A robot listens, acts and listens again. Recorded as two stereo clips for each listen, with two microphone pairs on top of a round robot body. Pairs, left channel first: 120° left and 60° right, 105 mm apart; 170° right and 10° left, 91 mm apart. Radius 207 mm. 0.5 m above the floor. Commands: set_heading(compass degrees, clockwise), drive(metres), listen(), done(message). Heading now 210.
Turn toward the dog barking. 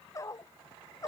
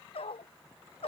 set_heading(30)
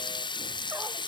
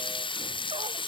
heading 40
set_heading(30)
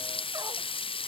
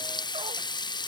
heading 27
listen()
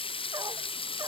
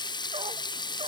done("Facing where the dog barking came from. I can't hear it now.")